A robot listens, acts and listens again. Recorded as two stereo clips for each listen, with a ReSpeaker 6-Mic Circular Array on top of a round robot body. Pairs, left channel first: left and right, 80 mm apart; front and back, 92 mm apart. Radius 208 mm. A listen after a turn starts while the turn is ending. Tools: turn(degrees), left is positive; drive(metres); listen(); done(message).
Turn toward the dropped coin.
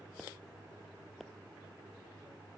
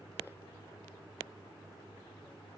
listen()
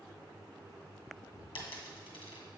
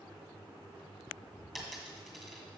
turn(degrees=90)
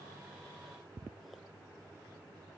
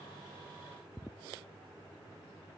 done("I heard a dropped coin from this way, but can't make it out now.")